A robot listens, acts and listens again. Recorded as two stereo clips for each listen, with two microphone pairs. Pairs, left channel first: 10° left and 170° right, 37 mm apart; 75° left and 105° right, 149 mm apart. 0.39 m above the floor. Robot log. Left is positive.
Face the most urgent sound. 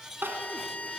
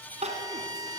note: The crying: 150° right.
cmd yaw -150
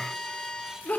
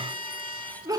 note: The crying is now 35° right.
cmd yaw -35
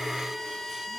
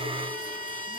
cmd idle
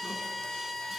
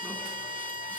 cmd idle
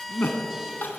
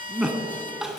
note: The crying is now 15° right.
cmd yaw -15
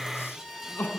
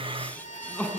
end: Found it: crying, straight ahead.